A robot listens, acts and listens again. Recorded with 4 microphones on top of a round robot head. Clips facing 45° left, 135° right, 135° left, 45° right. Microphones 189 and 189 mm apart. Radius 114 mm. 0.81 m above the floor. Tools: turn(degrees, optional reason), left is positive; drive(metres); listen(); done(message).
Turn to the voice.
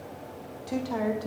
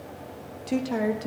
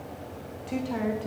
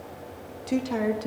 turn(degrees=-75, reason="The woman speaking: 75° right.")
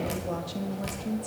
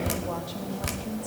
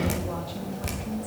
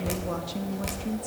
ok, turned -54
turn(degrees=-20, reason="The woman speaking is now 20° right.")
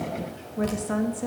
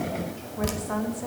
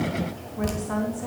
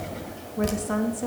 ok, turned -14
turn(degrees=-10, reason="The woman speaking is now 10° right.")
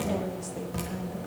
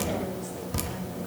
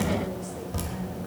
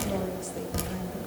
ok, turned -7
listen()
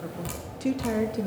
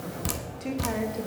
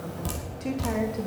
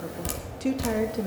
done("Facing the woman speaking.")